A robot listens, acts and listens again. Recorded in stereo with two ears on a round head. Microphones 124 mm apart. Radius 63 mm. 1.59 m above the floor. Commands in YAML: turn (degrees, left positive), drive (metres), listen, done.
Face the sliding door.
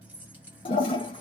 listen: true
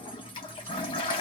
listen: true
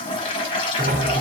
turn: -90
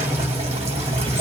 turn: -15
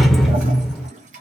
done: "Found it: a sliding door, straight ahead, under 1 m away."